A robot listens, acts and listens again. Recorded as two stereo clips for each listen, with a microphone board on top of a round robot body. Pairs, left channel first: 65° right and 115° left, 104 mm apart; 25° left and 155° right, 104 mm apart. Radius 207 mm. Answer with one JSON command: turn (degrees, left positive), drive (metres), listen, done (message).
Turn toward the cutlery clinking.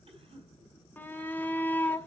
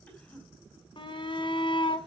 {"listen": true}
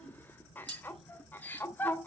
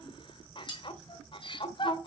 {"turn": 65}
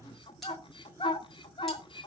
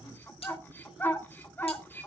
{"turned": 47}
{"turn": 20}
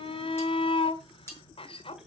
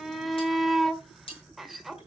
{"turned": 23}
{"done": "Facing the cutlery clinking."}